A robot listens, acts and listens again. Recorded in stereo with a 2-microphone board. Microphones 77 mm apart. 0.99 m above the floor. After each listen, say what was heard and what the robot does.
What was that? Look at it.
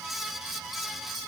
Keep listening.
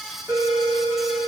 The phone ringing: about 25° right or 155° right. Turn 25° right.
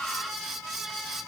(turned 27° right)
Keep listening.
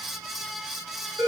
So it is at 130° right. Turn 130° right.
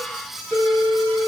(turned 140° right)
The phone ringing is now 10° left. Turn 10° left.
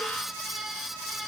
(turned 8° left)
Keep listening.
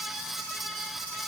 Keep listening.
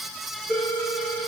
Found it: a phone ringing, straight ahead.